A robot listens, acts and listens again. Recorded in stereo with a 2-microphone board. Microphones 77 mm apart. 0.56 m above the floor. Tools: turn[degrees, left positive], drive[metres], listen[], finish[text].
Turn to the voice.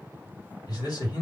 Thought: The man speaking: about 55° left or 125° left.
Action: turn[55]
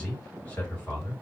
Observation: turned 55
Thought: So it is at 25° left.
Action: turn[25]
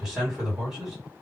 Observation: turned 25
Action: finish[Found it: a man speaking, straight ahead.]